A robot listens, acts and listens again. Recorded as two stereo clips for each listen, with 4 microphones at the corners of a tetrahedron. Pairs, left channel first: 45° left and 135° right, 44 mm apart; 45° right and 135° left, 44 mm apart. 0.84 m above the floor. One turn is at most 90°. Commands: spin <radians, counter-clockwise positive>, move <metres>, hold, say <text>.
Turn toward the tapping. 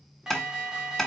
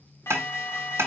spin 1.57
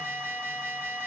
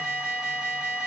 spin 0.70
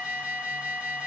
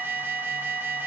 hold
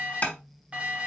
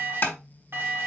say Facing the tapping, 1 to 2 m away.